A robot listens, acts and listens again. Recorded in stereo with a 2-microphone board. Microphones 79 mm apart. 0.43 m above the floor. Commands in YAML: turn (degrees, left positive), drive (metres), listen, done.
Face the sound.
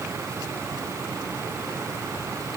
listen: true
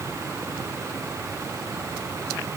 listen: true
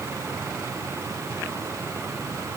done: "I can't make out anything."